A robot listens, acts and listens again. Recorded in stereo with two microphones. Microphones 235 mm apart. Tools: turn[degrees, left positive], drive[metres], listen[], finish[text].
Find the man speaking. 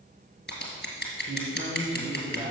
Thought: The man speaking: about 65° left or 115° left.
Action: turn[65]
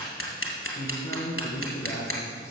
Thought: So it is at 15° left.
Action: turn[15]
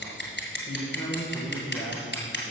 Action: finish[Found it: a man speaking, straight ahead.]